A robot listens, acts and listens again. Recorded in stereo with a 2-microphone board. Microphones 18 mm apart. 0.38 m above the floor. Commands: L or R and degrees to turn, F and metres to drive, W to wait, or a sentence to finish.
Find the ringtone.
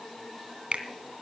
W
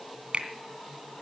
W
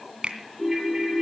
R15
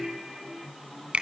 R150
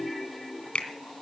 Facing the ringtone, over 4 m away.